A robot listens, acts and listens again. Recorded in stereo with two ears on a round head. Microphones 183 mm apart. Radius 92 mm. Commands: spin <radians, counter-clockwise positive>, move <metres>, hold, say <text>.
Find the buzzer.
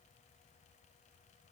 hold
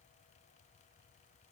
hold
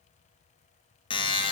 spin 0.44
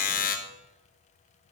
spin 2.27
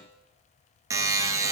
spin -0.26
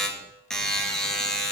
say Facing the buzzer.